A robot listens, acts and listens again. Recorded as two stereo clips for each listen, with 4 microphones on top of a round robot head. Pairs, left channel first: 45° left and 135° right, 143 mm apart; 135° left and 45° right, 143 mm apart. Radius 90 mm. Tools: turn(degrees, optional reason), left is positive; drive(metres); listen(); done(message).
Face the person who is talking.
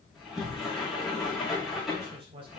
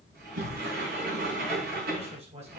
turn(degrees=-85, reason="The man speaking: 85° right.")
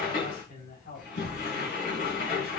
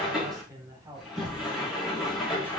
turn(degrees=25, reason="The man speaking is now 25° left.")
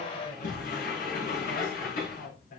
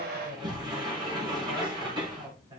turn(degrees=15, reason="The man speaking is now 15° left.")
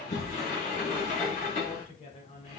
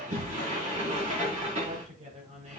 done("Facing the man speaking, over 4 m away.")